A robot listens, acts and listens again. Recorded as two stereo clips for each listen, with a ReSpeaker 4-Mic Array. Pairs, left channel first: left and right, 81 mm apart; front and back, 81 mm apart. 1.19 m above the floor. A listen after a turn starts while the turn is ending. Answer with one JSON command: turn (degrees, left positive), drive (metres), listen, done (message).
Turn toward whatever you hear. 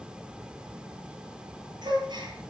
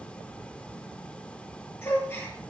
{"turn": -60}
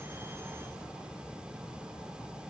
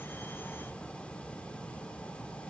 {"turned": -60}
{"done": "I heard a gasp from this way, but can't make it out now."}